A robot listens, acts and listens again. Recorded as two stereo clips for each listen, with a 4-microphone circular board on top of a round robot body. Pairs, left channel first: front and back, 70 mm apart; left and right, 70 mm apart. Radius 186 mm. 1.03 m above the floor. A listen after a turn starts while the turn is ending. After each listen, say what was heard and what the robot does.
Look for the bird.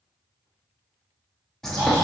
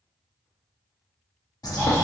The bird: 85° left. Turn 85° left.
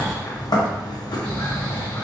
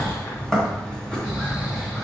The bird is now 10° left. Turn 10° left.
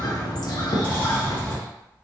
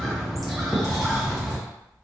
Facing the bird, 1 to 2 m away.